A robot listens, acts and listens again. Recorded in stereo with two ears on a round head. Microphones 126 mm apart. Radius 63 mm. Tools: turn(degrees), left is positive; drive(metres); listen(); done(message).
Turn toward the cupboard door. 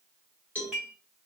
listen()
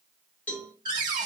turn(degrees=-30)
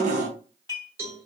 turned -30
turn(degrees=-115)
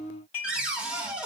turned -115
done("Found it: a cupboard door, straight ahead.")